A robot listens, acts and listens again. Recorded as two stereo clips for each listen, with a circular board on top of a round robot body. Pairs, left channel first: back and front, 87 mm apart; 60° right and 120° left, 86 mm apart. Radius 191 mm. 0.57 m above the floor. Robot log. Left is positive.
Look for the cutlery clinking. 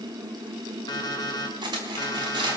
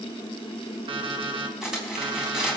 note: The cutlery clinking: 35° left.
cmd yaw +35
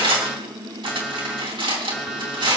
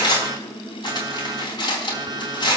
note: The cutlery clinking is now 20° right.
cmd yaw -20
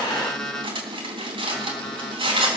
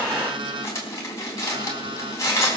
end: Facing the cutlery clinking.